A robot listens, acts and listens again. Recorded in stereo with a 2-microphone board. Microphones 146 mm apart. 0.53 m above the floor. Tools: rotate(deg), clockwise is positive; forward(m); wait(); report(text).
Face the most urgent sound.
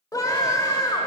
rotate(-25)
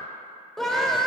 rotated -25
report("Facing the scream, 1 to 2 m away.")